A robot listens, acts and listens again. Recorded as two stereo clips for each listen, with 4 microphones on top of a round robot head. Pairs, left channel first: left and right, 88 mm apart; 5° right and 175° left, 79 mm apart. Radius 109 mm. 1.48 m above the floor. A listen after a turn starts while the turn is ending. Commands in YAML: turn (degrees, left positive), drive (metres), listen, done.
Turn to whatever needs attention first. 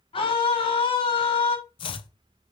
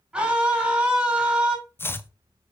turn: 100
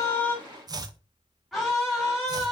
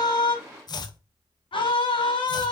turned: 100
done: "Found it: a scream, straight ahead."